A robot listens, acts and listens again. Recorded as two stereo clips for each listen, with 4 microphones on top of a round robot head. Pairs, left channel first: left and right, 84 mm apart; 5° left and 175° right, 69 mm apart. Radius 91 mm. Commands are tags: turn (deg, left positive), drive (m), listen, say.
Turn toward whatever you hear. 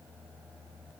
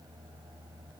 <listen/>
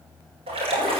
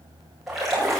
<turn deg="-90"/>
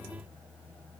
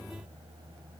<say>I heard a splash from this way, but can't make it out now.</say>